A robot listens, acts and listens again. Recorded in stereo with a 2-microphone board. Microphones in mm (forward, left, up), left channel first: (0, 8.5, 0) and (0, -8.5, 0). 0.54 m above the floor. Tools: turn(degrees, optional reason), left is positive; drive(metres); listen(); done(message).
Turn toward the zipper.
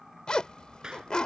turn(degrees=50, reason="The zipper: about 50° left or 130° left.")
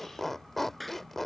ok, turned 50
turn(degrees=10, reason="So it is at 10° left.")
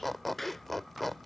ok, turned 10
done("Facing the zipper.")